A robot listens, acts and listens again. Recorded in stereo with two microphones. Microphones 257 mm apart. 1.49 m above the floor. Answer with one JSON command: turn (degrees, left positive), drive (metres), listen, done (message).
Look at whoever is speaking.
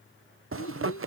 {"turn": 65}
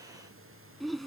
{"done": "Facing the child speaking."}